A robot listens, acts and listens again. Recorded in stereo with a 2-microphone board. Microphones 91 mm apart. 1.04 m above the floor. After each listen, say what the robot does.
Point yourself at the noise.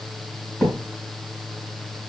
Turn 30° left.
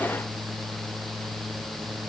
Keep listening.
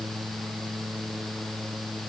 I heard a thud, but can't make it out now. It was about 25° right or 145° left.